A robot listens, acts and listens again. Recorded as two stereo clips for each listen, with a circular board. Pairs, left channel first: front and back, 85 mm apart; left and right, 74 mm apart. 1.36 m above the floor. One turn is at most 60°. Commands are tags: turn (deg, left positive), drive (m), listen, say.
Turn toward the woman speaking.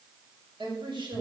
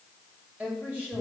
<turn deg="-60"/>
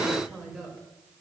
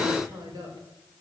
<turn deg="-60"/>
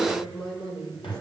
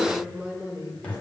<turn deg="-20"/>
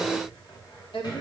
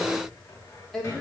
<say>Found it: a woman speaking, straight ahead.</say>